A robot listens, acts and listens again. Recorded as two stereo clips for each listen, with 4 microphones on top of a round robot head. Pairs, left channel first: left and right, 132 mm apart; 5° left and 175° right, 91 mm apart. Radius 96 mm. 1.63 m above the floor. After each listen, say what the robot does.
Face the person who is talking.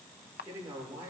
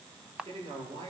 Turn 165° right.
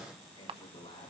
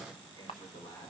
Turn 45° left.
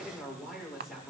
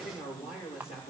Facing the man speaking.